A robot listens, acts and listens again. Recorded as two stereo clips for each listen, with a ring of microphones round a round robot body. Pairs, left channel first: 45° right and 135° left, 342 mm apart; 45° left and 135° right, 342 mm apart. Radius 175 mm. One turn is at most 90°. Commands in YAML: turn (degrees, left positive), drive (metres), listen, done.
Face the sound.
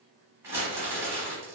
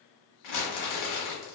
turn: 55
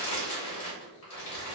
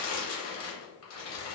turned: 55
done: "Found it: crumpling, straight ahead."